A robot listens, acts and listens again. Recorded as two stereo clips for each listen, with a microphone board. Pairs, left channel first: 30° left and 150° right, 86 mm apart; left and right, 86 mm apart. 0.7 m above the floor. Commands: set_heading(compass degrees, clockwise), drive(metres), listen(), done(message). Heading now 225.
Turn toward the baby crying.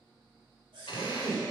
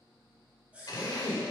set_heading(30)
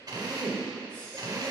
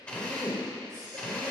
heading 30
listen()
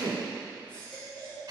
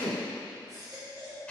set_heading(75)
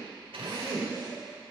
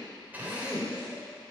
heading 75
listen()
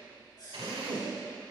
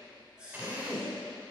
set_heading(85)
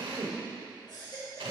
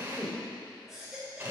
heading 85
done("Facing the baby crying.")